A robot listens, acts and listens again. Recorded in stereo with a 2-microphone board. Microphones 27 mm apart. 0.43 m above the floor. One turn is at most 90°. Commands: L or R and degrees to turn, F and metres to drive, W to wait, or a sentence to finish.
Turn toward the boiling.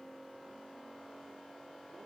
W
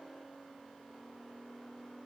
W
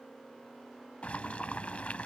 L60
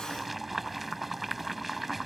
Found it: boiling, straight ahead.